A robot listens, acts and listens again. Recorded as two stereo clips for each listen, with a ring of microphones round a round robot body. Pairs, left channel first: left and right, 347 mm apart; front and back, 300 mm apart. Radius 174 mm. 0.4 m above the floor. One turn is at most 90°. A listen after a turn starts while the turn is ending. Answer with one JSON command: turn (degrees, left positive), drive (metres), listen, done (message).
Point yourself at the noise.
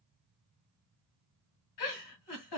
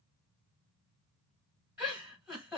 {"turn": 90}
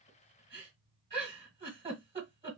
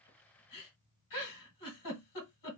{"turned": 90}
{"turn": -20}
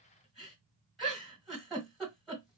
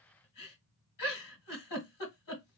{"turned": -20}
{"done": "Facing the giggle."}